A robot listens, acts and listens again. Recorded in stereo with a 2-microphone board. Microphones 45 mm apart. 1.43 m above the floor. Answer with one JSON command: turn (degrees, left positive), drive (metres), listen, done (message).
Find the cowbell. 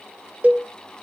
{"turn": -35}
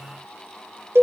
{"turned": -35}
{"turn": -110}
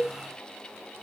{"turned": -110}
{"turn": -35}
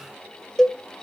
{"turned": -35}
{"turn": 10}
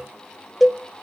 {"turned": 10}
{"done": "Found it: a cowbell, straight ahead, 1 to 2 m away."}